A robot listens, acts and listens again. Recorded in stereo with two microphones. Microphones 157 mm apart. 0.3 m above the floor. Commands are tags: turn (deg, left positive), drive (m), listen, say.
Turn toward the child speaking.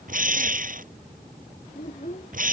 <turn deg="50"/>
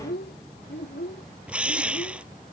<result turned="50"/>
<turn deg="80"/>
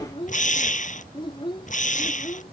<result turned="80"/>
<turn deg="30"/>
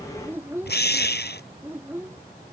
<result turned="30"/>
<turn deg="-15"/>
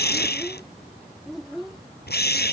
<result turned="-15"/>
<say>Found it: a child speaking, straight ahead.</say>